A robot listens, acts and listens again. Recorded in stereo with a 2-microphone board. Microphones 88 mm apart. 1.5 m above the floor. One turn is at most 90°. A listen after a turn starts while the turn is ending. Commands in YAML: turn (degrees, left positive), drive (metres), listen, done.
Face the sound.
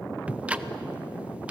turn: -15
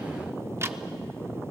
turn: -90
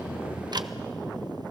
turn: -55
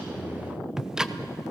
done: "Found it: ticking, straight ahead."